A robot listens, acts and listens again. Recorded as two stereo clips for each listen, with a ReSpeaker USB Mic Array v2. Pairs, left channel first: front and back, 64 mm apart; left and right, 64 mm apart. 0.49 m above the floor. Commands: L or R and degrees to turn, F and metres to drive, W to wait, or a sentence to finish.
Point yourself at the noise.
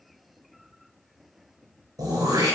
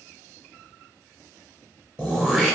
R165
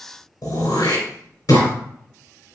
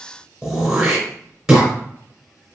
Facing the throat clearing, 2 to 4 m away.